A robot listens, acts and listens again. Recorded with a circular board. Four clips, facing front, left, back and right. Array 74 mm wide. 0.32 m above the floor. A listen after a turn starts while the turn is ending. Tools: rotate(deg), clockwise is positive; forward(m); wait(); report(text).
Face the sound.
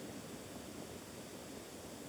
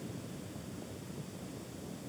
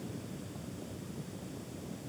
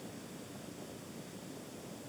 wait()
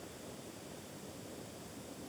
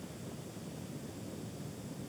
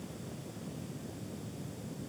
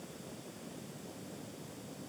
wait()
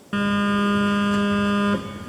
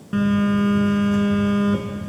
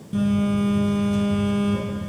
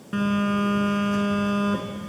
report("Facing the phone buzzing.")